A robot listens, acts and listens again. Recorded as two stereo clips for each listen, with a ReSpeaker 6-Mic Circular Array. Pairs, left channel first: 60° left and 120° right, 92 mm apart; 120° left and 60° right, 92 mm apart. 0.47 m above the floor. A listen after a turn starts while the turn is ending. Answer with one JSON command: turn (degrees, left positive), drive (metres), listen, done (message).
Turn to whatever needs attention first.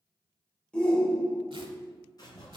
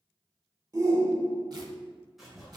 {"turn": -20}
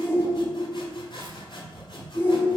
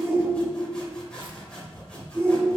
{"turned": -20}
{"done": "Found it: a shout, straight ahead, 1 to 2 m away."}